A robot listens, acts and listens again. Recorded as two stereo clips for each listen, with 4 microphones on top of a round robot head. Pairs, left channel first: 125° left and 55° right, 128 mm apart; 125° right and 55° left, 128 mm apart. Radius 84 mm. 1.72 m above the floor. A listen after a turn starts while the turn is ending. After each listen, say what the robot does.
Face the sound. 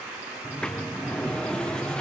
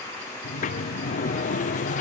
Turn 155° right.
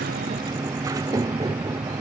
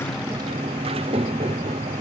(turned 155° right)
Turn 10° left.
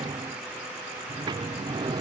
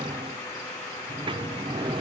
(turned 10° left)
Found it: a sliding door, straight ahead.